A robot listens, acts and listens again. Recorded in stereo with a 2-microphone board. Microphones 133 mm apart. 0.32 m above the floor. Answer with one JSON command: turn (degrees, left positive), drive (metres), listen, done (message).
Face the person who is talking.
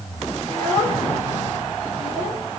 {"turn": 30}
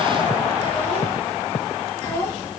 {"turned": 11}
{"turn": 20}
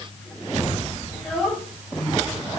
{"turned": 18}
{"done": "Found it: a child speaking, straight ahead, 2 to 4 m away."}